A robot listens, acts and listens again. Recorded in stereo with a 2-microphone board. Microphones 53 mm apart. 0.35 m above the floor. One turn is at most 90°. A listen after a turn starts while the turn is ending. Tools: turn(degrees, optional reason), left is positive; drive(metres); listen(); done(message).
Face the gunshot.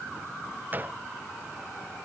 turn(degrees=-35, reason="The gunshot: about 35° right or 145° right.")
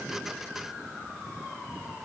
listen()
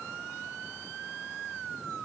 done("I heard a gunshot, but can't make it out now. It was about straight ahead or 110° right.")